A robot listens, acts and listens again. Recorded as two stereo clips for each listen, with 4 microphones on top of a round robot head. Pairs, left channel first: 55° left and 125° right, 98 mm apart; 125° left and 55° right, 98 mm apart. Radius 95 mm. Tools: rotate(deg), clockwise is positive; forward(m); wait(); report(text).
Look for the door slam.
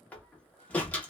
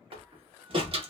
rotate(20)
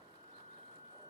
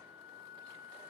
report("I heard a door slam from this way, but can't make it out now.")